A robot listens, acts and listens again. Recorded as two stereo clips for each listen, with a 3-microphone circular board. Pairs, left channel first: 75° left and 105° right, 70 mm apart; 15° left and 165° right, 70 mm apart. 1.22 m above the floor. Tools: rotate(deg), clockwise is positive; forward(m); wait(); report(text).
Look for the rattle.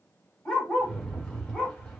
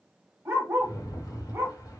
report("Found it: a rattle, straight ahead, 1 to 2 m away.")